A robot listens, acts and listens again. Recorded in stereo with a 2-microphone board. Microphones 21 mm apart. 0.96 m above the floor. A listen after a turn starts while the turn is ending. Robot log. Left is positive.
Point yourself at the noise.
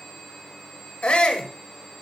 cmd yaw +90
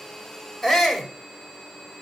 end: Found it: a shout, straight ahead, over 4 m away.